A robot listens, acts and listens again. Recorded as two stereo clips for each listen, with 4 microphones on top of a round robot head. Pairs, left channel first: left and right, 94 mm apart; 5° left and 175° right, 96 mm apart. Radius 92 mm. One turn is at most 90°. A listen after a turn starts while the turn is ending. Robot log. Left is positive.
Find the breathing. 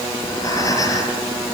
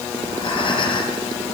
note: The breathing: 35° left.
cmd yaw +35
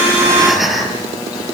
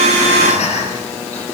end: Facing the breathing, over 4 m away.